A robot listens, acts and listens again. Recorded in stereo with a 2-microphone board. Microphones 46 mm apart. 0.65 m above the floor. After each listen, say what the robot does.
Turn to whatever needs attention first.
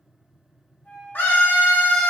Turn 50° left.
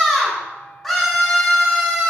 Found it: a scream, straight ahead.